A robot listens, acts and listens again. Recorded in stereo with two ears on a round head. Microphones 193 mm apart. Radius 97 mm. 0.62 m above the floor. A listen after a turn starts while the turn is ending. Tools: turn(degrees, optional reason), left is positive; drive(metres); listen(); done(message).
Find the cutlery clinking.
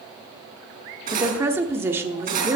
turn(degrees=-40, reason="The cutlery clinking: about 40° right or 140° right.")
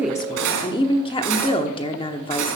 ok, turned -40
turn(degrees=-95, reason="So it is at 95° right.")
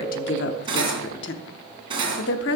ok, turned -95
turn(degrees=-25, reason="The cutlery clinking is now 25° right.")
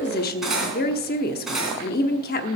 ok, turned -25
done("Found it: cutlery clinking, straight ahead.")